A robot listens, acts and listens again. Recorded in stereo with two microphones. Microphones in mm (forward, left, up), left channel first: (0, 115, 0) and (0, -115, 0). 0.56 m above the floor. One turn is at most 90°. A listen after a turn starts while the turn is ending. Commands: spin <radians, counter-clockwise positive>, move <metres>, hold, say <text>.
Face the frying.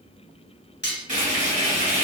spin -0.61
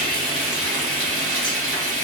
spin -1.57
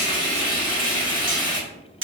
spin -0.35
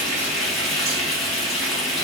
say Found it: frying, straight ahead, 1 to 2 m away.